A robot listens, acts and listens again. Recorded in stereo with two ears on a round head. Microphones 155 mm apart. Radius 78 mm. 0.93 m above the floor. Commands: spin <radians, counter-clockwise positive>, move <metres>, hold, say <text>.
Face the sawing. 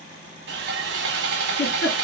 spin -1.31
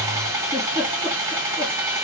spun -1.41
spin -0.26
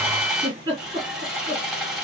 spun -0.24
say Found it: sawing, straight ahead, 1 to 2 m away.